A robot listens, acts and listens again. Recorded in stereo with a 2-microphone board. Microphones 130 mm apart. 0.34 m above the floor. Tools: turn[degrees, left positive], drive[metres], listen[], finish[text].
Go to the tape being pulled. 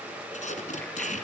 Thought: The tape being pulled: about 70° left or 110° left.
Action: turn[70]
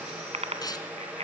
Thought: So it is at 30° left.
Action: turn[30]
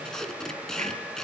Action: drive[1.0]
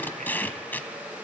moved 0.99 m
Thought: The tape being pulled is now 15° left.
Action: turn[15]
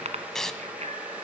Action: drive[1.0]
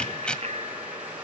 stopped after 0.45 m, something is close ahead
Thought: The tape being pulled is now 10° left.
Action: turn[10]
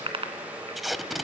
Action: finish[Arrived at the tape being pulled, straight ahead.]